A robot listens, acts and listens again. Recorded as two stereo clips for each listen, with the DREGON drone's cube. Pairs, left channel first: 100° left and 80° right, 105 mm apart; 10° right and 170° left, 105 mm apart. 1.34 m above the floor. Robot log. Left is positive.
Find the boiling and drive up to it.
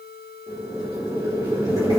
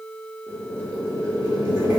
note: The boiling: 135° right.
cmd yaw -135
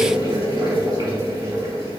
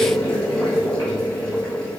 note: The boiling is now 40° right.
cmd yaw -40
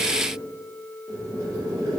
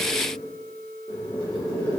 note: The boiling is now 15° right.
cmd yaw -15
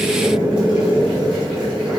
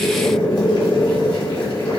cmd fwd 1.0
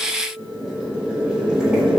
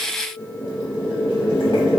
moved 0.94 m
cmd fwd 1.0
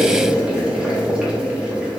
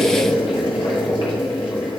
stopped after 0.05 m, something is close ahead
end: Arrived at the boiling, straight ahead.